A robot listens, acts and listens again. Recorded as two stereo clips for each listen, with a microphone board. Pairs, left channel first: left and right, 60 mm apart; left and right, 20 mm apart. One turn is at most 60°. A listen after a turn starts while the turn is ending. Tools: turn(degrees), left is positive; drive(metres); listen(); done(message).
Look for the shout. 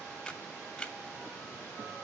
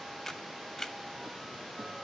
listen()
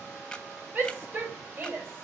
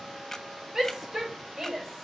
turn(degrees=-40)
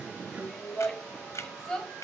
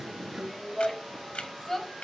done("Found it: a shout, straight ahead.")